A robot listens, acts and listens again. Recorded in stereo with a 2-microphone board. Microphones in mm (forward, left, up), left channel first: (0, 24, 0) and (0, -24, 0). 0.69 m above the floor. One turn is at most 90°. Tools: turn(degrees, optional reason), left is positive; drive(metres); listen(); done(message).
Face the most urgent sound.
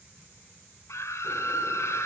turn(degrees=70, reason="The scream: about 70° left or 110° left.")
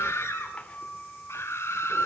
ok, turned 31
turn(degrees=70, reason="So it is at 70° left.")
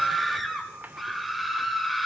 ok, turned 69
done("Found it: a scream, straight ahead.")